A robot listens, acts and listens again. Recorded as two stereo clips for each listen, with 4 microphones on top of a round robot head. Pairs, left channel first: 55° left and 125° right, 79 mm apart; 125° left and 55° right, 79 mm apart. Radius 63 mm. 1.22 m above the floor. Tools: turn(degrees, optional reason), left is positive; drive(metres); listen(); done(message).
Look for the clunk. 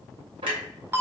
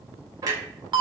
turn(degrees=-100, reason="The clunk: 100° right.")
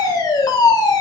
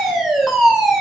done("Facing where the clunk came from. I can't hear it now.")